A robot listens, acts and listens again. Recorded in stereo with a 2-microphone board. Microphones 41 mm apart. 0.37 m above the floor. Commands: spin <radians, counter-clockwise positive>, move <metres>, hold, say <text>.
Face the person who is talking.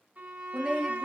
spin 0.52
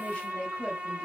spin 2.62
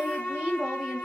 spin -0.44
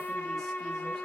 hold
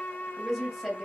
say Facing the woman speaking.